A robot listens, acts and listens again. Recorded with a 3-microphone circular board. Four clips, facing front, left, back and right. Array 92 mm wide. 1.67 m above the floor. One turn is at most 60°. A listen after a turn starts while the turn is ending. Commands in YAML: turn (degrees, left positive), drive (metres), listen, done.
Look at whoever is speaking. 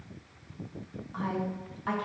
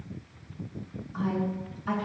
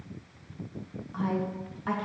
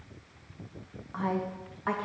turn: -60
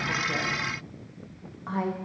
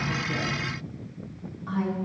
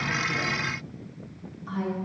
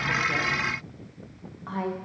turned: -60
turn: -35
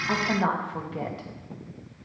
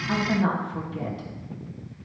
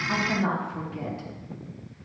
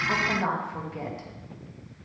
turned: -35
turn: -20
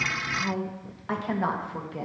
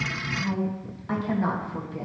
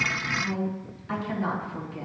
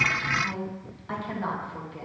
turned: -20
done: "Facing the woman speaking."